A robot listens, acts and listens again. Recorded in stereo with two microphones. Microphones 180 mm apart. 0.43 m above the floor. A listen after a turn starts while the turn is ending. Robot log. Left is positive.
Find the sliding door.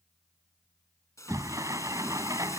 note: The sliding door: about 20° right or 160° right.
cmd yaw -20
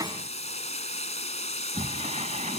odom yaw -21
note: So it is at 140° right.
cmd yaw -140
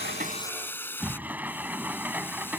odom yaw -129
note: The sliding door is now 10° right.
cmd yaw -10
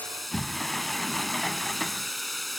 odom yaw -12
end: Found it: a sliding door, straight ahead.